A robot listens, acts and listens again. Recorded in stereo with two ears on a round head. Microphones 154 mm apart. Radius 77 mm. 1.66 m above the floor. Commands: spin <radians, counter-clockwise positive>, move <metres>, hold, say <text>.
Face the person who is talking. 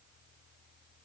hold
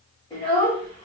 spin 0.52
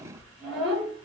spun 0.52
say Found it: a child speaking, straight ahead, 1 to 2 m away.